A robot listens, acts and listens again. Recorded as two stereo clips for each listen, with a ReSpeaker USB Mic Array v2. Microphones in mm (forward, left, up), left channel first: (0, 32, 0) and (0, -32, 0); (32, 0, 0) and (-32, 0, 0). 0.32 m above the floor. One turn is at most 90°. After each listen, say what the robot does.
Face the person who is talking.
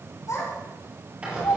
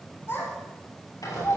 Turn 50° left.
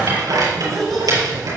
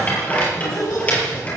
Facing the child speaking.